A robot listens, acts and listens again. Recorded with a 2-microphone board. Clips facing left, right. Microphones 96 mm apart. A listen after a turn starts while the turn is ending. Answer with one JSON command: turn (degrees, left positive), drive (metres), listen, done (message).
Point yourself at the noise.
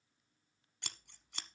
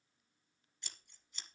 {"turn": 75}
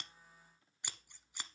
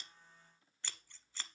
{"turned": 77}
{"turn": 15}
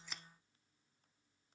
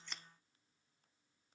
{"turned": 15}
{"listen": true}
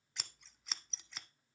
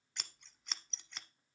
{"done": "Found it: scissors, straight ahead, under 1 m away."}